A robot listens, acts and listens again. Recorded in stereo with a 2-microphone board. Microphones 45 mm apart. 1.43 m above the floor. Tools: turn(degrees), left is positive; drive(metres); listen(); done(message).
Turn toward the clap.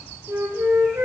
listen()
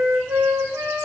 listen()
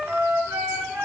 done("I can't make out a clap to turn to.")